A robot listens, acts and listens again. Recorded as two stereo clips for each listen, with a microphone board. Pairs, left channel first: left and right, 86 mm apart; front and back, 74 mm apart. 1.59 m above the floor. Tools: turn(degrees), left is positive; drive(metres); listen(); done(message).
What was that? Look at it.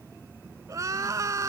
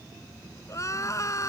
turn(degrees=-40)
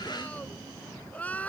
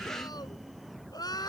turn(degrees=20)
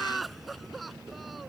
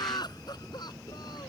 done("Facing the crying.")